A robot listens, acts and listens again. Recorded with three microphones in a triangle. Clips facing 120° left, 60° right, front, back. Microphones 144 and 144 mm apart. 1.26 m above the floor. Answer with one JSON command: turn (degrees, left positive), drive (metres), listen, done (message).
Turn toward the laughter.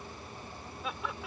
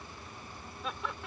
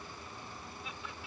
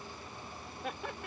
{"turn": -150}
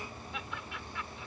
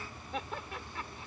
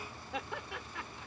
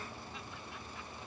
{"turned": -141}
{"turn": -10}
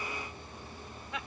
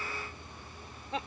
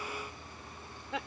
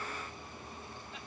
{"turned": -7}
{"done": "Facing the laughter."}